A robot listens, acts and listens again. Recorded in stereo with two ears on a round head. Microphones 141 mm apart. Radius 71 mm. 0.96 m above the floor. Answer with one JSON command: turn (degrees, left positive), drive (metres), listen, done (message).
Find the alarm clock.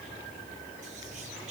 {"listen": true}
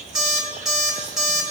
{"turn": -30}
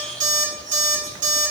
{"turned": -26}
{"turn": -150}
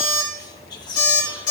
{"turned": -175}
{"turn": 25}
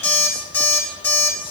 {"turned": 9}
{"turn": 15}
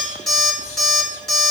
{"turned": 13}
{"done": "Found it: an alarm clock, straight ahead."}